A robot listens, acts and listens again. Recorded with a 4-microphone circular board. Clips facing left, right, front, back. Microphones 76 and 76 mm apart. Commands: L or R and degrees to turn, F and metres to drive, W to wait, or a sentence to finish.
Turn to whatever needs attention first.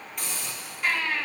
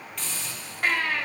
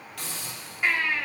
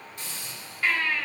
R70
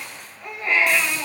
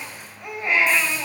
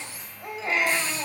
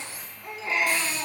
R15
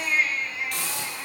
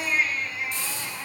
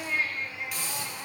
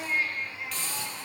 Found it: a baby crying, straight ahead.